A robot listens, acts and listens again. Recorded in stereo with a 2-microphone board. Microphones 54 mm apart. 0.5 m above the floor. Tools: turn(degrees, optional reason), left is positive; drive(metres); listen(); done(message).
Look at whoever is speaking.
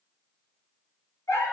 listen()
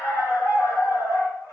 listen()
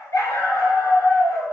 done("I can't make out anyone speaking, only a dog barking.")